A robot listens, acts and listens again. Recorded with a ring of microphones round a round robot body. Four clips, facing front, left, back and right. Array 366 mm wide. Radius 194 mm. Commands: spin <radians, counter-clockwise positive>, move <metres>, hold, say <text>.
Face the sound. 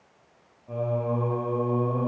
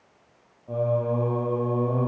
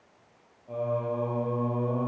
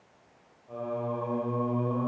spin 1.31
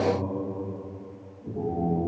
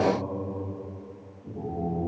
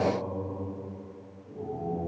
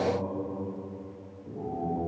spin 0.17
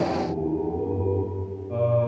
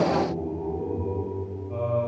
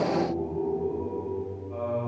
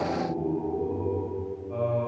say Facing the singing, over 4 m away.